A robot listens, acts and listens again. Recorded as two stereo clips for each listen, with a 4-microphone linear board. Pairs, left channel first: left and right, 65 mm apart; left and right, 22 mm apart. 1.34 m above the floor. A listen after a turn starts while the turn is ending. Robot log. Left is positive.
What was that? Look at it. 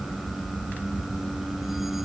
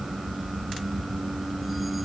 cmd idle
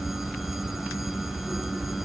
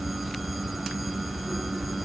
cmd idle
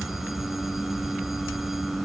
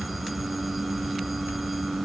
end: I can't make out anything to turn to.